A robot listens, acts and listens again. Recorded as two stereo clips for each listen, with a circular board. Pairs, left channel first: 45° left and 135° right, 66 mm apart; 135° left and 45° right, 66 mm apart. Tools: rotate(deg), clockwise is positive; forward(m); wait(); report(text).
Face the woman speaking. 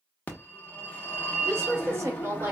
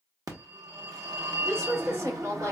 rotate(80)
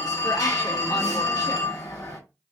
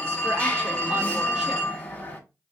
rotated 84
wait()
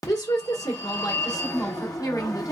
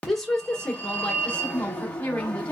rotate(-65)
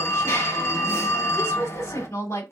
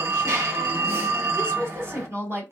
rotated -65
report("Found it: a woman speaking, straight ahead.")